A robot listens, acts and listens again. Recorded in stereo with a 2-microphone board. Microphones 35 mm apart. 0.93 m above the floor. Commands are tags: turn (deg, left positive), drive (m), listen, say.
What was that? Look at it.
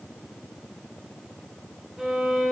<turn deg="-30"/>
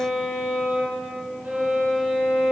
<turn deg="-140"/>
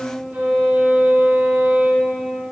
<turn deg="-50"/>
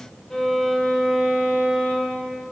<turn deg="10"/>
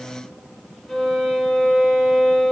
<say>Found it: a violin, straight ahead, 2 to 4 m away.</say>